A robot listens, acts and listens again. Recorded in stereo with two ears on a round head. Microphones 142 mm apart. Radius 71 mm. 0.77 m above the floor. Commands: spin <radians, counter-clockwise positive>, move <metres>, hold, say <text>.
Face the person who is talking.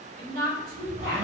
spin -1.05
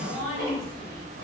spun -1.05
spin -0.35
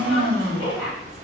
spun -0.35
say Facing the woman speaking, 1 to 2 m away.